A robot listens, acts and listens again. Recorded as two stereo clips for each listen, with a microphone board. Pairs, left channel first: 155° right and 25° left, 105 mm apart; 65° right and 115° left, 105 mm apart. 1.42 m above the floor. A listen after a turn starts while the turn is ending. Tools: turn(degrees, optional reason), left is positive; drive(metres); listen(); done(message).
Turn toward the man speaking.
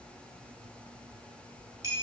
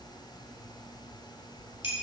listen()
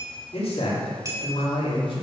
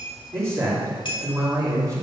turn(degrees=170, reason="The man speaking: 170° left.")
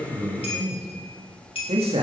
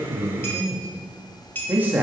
turn(degrees=40, reason="The man speaking is now 40° left.")
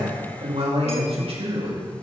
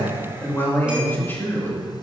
done("Facing the man speaking.")